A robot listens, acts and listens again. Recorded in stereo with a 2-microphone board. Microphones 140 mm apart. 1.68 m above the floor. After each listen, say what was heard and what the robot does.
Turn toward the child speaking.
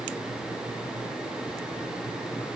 Keep listening.
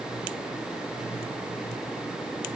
Keep listening.
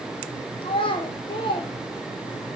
The child speaking: about 35° left or 145° left. Turn 35° left.
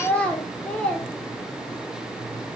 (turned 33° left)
So it is at 10° left. Turn 10° left.
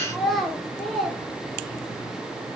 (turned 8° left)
Facing the child speaking, under 1 m away.